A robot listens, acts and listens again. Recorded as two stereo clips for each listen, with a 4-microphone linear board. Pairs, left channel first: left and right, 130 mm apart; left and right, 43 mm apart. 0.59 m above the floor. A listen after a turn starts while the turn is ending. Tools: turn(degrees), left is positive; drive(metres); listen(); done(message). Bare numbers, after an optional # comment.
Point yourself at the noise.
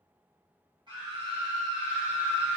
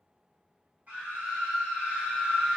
# The scream: about 35° right or 145° right.
turn(-35)
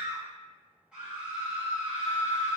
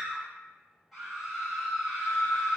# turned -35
done("Facing the scream.")